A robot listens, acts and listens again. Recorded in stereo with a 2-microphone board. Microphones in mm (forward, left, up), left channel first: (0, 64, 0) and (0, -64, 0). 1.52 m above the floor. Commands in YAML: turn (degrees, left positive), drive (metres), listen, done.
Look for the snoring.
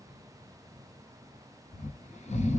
turn: 90
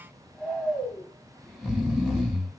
done: "Facing the snoring, under 1 m away."